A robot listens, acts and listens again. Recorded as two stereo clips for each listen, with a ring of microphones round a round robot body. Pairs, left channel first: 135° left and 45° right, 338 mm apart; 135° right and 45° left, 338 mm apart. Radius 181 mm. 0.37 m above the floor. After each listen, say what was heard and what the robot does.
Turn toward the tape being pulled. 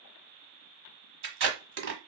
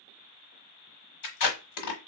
The tape being pulled: 100° right. Turn 100° right.
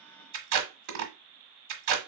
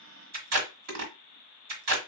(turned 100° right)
Found it: tape being pulled, straight ahead.